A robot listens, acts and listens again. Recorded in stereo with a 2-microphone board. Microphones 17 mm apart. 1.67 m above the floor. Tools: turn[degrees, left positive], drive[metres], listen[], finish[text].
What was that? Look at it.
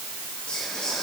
Thought: The whispering: about 50° left or 130° left.
Action: turn[50]
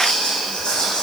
Thought: So it is at 80° left.
Action: turn[80]
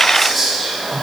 Action: finish[Found it: whispering, straight ahead.]